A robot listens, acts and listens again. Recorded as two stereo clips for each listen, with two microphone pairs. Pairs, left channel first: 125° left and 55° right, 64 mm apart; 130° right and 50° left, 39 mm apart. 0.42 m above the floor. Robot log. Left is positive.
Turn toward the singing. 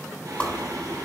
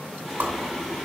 note: The singing: 40° right.
cmd yaw -40
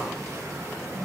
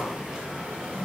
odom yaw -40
note: The singing is now 15° right.
cmd yaw -15
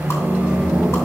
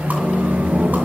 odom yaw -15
note: The singing is now 15° left.
cmd yaw +15
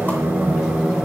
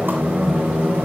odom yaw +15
note: The singing is now 20° left.
cmd yaw +20
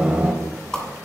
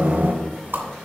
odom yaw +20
note: The singing is now 20° left.
cmd yaw +20
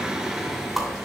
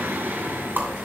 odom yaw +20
note: The singing is now 30° left.
cmd yaw +30
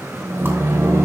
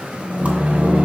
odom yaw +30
note: The singing is now 10° right.
cmd yaw -10
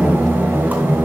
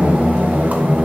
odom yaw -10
end: Found it: singing, straight ahead, 1 to 2 m away.